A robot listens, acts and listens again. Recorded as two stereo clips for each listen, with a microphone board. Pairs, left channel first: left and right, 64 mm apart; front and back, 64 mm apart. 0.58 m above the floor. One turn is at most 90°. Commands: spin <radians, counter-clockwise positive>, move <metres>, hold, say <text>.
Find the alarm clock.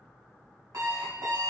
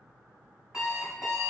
spin -1.57
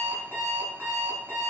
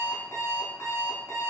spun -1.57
spin -0.61
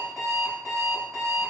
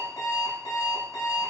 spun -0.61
spin -0.17
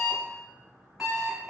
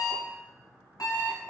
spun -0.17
say Found it: an alarm clock, straight ahead.